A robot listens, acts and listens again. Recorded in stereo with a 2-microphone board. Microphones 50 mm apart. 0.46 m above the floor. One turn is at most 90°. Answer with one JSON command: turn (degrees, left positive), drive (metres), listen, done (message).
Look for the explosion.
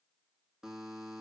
{"listen": true}
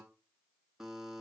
{"listen": true}
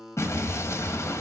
{"turn": 70}
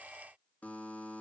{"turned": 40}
{"listen": true}
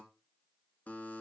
{"done": "I heard an explosion, but can't make it out now. It was about 30° left or 70° left."}